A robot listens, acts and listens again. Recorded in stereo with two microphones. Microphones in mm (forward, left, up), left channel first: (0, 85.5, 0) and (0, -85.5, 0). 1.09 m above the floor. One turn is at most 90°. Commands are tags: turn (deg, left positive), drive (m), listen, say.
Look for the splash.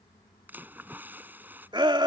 <turn deg="-30"/>
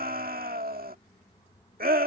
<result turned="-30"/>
<listen/>
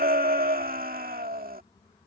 <say>I heard a splash, but can't make it out now. It was about 20° left or 140° right.</say>